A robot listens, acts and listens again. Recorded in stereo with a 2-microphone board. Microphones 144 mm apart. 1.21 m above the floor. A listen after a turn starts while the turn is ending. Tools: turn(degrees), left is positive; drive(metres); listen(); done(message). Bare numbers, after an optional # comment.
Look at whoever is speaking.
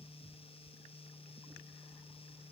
listen()
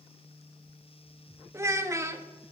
# The child speaking: about 20° right or 160° right.
turn(-20)
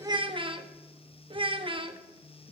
# So it is at 140° right.
turn(-140)
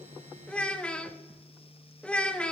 # The child speaking is now 10° left.
turn(10)
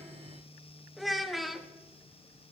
done("Found it: a child speaking, straight ahead.")